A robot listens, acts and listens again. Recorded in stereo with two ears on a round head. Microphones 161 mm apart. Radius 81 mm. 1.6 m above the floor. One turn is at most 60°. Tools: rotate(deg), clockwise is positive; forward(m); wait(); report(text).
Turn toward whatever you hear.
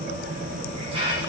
rotate(30)
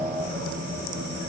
wait()
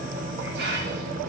rotate(60)
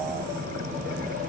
rotate(60)
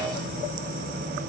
wait()
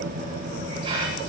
rotate(30)
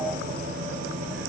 wait()
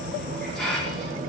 report("Facing the hiss, over 4 m away.")